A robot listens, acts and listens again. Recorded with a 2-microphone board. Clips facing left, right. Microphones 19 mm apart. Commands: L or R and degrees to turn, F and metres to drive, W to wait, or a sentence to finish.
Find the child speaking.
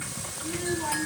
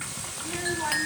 R60
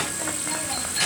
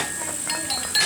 Facing the child speaking, over 4 m away.